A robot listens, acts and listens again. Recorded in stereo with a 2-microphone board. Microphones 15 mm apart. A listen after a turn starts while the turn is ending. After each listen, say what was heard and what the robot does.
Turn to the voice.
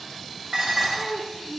The child speaking: about 70° right or 110° right. Turn 70° right.
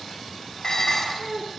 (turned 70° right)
Found it: a child speaking, straight ahead.